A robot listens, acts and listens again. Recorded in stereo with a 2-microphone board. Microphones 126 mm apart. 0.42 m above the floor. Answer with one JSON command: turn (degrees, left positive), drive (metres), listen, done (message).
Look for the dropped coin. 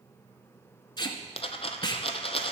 {"turn": 50}
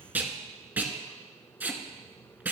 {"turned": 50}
{"listen": true}
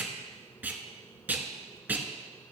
{"done": "I heard a dropped coin, but can't make it out now. It was about straight ahead or 80° left."}